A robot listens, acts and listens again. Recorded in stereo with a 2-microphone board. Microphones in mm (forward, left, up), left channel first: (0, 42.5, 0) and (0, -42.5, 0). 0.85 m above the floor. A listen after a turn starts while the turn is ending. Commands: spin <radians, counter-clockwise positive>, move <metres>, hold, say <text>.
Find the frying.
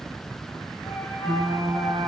spin -1.22
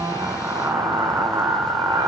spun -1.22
spin -0.79
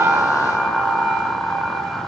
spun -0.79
say Facing the frying.